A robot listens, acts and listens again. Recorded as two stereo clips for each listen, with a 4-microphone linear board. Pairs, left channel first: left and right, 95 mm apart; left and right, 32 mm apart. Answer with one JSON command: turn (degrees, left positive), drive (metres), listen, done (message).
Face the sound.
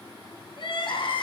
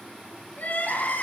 {"turn": 55}
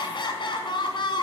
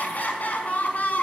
{"turn": 60}
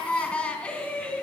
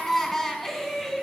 {"turn": 15}
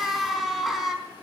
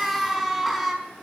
{"done": "Found it: crying, straight ahead, over 4 m away."}